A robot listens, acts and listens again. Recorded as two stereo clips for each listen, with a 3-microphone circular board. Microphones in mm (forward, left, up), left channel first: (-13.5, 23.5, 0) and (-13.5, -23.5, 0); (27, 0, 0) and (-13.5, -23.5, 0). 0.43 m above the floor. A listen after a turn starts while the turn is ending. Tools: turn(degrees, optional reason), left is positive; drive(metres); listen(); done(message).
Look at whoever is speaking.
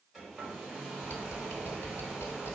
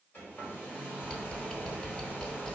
listen()
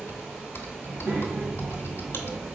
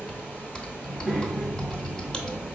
turn(degrees=-45, reason="The child speaking: 45° right.")
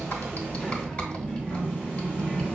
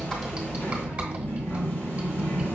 turn(degrees=10, reason="The child speaking is now 10° left.")
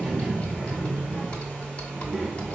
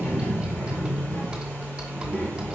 done("Found it: a child speaking, straight ahead.")